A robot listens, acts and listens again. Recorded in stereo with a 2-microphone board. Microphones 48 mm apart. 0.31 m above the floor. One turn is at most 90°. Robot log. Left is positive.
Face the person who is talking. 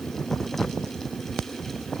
cmd idle
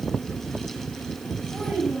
note: The child speaking: about 25° left or 155° left.
cmd yaw +25
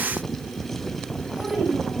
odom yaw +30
end: Facing the child speaking, over 4 m away.